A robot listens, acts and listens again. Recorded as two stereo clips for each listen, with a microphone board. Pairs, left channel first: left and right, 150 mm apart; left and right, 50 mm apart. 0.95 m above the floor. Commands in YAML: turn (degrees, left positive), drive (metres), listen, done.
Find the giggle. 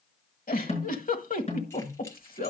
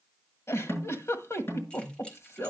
turn: 70
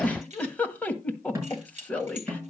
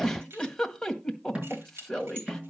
turn: 10
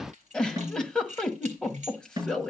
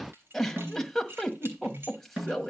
done: "Facing the giggle, 1 to 2 m away."